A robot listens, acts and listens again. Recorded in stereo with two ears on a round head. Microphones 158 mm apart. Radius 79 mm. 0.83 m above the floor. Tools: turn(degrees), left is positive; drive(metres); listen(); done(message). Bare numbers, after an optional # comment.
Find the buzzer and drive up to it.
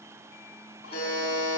# The buzzer: about 35° left or 145° left.
turn(35)
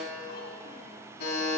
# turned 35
# So it is at 115° left.
turn(115)
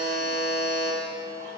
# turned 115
# The buzzer is now 20° left.
turn(20)
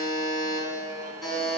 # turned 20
drive(1.0)
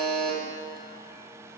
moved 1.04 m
# The buzzer is now 10° left.
turn(10)
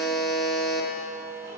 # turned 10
drive(1.0)
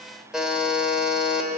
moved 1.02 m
drive(1.0)
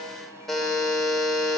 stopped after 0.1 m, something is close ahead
done("Arrived at the buzzer, straight ahead.")